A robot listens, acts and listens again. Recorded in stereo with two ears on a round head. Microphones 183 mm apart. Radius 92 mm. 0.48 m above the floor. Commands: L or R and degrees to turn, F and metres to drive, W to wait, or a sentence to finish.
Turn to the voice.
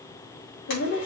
L65
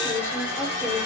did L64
L15
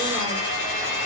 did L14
W
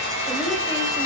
W
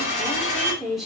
Found it: a woman speaking, straight ahead, 2 to 4 m away.